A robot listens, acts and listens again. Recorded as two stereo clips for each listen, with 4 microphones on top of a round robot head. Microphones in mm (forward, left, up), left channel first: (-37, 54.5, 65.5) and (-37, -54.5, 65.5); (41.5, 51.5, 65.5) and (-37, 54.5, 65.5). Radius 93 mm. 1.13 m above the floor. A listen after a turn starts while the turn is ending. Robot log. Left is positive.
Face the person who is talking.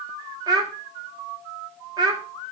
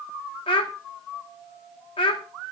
note: The child speaking: 25° right.
cmd yaw -25
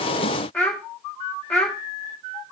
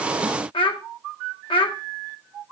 note: The child speaking is now 10° left.
cmd yaw +10
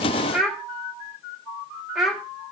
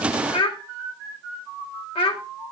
end: Facing the child speaking.